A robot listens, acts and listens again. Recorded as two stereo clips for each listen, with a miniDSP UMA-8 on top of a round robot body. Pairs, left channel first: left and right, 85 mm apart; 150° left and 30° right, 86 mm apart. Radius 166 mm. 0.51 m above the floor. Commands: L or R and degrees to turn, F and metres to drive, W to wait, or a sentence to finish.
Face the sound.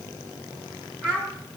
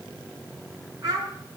L15
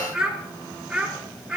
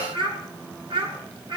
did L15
Facing the child speaking, over 4 m away.